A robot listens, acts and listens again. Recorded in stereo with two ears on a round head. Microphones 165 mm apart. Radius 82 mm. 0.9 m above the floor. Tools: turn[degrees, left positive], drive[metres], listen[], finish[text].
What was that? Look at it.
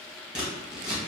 Action: turn[-30]
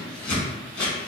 Thought: So it is at 30° left.
Action: turn[30]
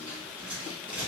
Thought: The scissors is now 10° right.
Action: turn[-10]
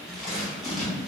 Action: finish[Facing the scissors.]